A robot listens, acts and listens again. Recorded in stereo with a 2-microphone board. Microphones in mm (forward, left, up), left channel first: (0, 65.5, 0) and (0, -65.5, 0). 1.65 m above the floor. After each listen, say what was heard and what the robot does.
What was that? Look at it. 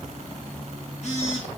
The phone buzzing: about 55° left or 125° left. Turn 55° left.
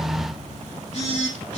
So it is at 70° left. Turn 70° left.
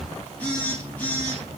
The phone buzzing is now 15° left. Turn 15° left.
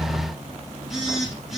Facing the phone buzzing.